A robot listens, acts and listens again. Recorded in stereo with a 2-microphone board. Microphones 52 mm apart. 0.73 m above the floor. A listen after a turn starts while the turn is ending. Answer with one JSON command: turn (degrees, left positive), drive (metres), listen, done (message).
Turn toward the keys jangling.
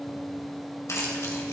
{"turn": 90}
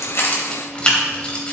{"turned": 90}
{"turn": 25}
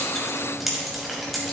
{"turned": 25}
{"done": "Found it: keys jangling, straight ahead."}